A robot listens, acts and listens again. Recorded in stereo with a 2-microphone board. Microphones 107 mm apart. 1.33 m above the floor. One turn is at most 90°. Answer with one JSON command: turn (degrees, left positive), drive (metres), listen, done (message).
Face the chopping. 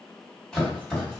{"turn": 30}
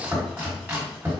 {"turn": -20}
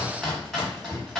{"done": "Found it: chopping, straight ahead, 1 to 2 m away."}